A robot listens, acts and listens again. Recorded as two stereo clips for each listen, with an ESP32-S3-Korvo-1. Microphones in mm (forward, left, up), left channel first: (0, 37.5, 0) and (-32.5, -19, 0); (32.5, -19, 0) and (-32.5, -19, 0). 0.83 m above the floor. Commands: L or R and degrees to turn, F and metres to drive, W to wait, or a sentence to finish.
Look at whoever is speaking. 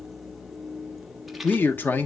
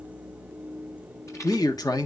Found it: a man speaking, straight ahead, 1 to 2 m away.